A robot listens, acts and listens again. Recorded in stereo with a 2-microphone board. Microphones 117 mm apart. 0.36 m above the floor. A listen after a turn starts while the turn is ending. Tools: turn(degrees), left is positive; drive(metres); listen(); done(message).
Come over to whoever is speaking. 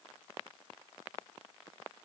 listen()
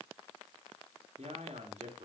turn(degrees=-75)
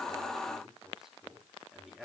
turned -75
drive(metres=1.0)
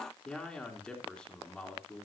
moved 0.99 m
turn(degrees=10)
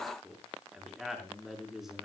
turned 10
drive(metres=1.0)
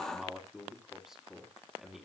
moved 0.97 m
drive(metres=1.0)
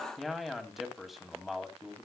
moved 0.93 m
drive(metres=1.0)
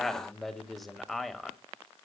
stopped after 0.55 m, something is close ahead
done("I am next to the man speaking.")